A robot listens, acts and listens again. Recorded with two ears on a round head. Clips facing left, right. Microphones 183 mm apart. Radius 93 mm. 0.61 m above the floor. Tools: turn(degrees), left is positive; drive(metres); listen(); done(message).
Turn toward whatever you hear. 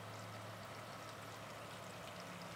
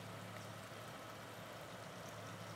listen()
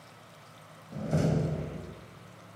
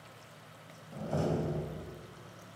turn(degrees=25)
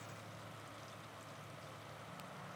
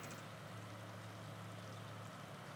listen()
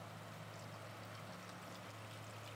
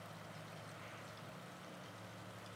done("I heard a door slam, but can't make it out now. It was about straight ahead or 130° left.")